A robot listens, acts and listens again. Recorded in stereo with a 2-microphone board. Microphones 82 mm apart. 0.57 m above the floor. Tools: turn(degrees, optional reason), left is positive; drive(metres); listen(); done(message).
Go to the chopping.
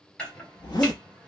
turn(degrees=30)
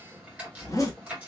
turn(degrees=-15, reason="So it is at 15° right.")
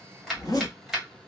drive(metres=1.0)
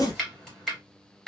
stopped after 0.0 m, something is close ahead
done("Blocked. The chopping is further on, straight ahead.")